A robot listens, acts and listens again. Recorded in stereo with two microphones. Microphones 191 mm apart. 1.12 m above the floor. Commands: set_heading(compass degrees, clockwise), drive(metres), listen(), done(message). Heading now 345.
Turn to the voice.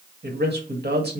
set_heading(45)
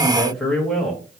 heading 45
done("Found it: a man speaking, straight ahead.")